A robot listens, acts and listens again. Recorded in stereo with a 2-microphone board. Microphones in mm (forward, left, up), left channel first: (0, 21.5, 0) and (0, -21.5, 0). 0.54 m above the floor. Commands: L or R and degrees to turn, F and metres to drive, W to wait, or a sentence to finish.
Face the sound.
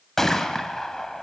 L30
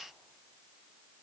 W
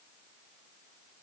I heard a gunshot, but can't make it out now. It was about 20° right or 140° left.